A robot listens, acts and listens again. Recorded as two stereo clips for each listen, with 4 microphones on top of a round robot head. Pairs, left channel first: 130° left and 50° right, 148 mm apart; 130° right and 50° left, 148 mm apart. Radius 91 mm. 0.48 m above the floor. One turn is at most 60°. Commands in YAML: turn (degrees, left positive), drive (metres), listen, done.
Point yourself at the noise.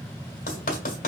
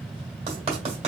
turn: 60
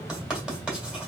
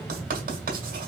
turn: 30
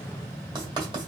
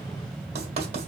done: "Facing the writing, 1 to 2 m away."